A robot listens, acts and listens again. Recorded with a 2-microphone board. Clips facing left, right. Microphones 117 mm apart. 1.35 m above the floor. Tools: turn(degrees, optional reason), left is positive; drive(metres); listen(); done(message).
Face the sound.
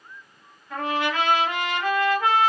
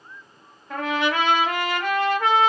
turn(degrees=-70, reason="The trumpet: about 70° right or 110° right.")
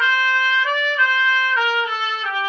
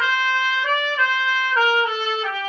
turn(degrees=-40, reason="So it is at 40° right.")
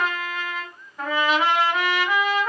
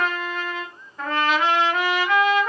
done("Found it: a trumpet, straight ahead, under 1 m away.")